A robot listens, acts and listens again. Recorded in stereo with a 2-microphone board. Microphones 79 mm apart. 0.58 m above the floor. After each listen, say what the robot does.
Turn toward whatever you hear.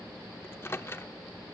Turn 30° left.
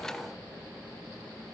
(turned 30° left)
Keep listening.
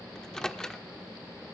Turn 10° left.
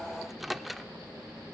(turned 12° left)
Found it: a microwave, straight ahead.